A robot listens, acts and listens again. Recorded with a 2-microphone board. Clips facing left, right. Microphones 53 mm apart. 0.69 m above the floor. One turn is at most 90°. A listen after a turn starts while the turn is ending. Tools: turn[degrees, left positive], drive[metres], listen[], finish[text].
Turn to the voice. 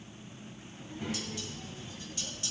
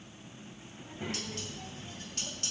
Thought: The child speaking: about 35° right or 145° right.
Action: turn[-35]
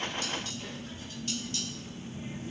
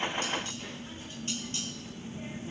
Thought: The child speaking: about 35° right or 145° right.
Action: turn[-35]
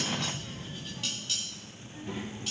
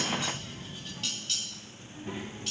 Thought: The child speaking: about 25° right or 155° right.
Action: turn[-25]
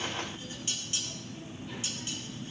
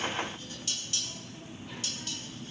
Action: finish[Facing the child speaking.]